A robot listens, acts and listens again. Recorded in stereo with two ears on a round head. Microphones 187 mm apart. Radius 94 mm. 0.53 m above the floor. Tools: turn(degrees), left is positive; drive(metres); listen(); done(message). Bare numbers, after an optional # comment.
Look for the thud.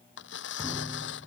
# The thud: about 15° left or 165° left.
turn(15)
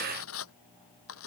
listen()
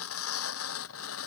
done("I heard a thud, but can't make it out now. It was about straight ahead or 150° left.")